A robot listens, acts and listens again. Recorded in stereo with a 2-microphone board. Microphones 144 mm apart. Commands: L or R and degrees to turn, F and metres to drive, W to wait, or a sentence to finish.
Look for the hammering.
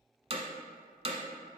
R45
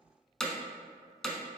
Found it: hammering, straight ahead.